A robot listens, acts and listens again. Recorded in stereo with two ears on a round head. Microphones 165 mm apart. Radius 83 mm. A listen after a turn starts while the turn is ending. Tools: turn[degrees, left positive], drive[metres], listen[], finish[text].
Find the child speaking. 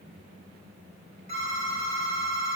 Action: listen[]
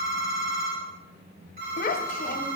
Thought: The child speaking: about 45° left or 135° left.
Action: turn[45]
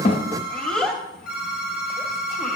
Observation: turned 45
Action: finish[Facing the child speaking, under 1 m away.]